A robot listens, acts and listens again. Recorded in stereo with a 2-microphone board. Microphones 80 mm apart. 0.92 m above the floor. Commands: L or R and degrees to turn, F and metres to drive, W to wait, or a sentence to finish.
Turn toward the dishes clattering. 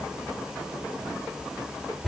W
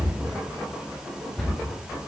W
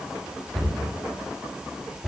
I can't make out dishes clattering, only a cupboard door.